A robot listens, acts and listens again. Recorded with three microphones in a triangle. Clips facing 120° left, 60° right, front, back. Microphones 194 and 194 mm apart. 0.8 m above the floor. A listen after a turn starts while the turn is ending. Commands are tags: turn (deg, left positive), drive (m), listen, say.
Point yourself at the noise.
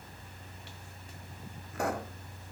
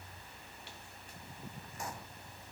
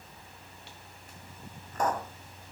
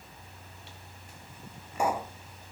<turn deg="100"/>
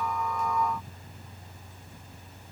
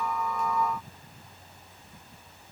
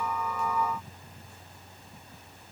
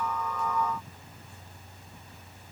<say>I heard a pop from this way, but can't make it out now.</say>